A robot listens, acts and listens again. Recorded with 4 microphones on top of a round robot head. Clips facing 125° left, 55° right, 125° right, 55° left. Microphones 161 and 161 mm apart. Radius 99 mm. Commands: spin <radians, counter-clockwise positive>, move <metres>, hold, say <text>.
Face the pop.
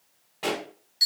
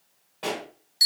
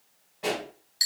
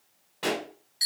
spin 0.70
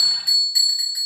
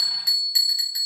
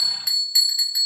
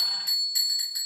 say Facing where the pop came from. I can't hear it now.